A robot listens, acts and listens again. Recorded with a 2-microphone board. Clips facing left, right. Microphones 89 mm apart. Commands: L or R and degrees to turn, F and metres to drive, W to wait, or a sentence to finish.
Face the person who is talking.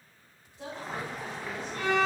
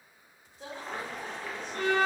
L90
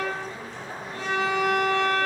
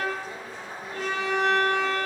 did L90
W
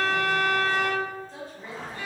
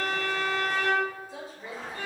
R10
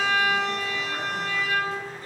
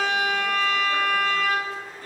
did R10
W
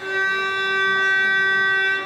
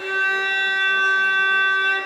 W
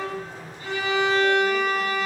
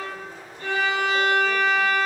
I heard a woman speaking from this way, but can't make it out now.